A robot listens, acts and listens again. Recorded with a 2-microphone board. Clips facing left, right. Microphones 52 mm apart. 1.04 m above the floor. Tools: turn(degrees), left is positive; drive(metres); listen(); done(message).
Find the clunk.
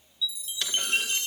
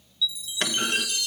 turn(degrees=-45)
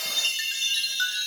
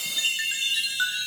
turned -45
listen()
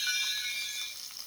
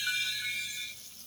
done("I heard a clunk, but can't make it out now. It was about straight ahead or 90° right.")